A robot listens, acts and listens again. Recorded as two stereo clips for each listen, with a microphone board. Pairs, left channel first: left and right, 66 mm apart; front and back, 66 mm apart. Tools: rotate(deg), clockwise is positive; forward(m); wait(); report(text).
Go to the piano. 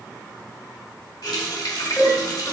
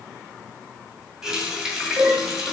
rotate(-155)
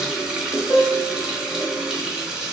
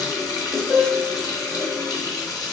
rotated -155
rotate(-45)
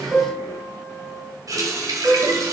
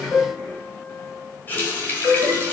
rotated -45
forward(1.0)
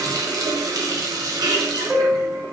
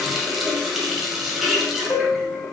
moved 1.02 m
forward(1.0)
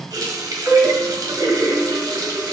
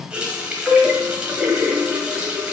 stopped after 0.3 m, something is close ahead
rotate(10)
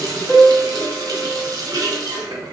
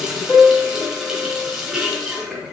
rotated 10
report("Arrived at the piano, straight ahead.")